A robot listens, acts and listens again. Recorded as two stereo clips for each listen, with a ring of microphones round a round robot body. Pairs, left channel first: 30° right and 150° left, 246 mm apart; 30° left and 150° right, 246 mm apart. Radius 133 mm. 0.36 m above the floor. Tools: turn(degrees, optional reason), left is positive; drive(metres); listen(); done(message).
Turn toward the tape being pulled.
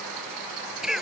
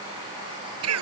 listen()
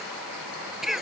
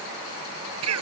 listen()
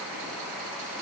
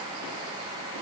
done("I can't make out tape being pulled to turn to.")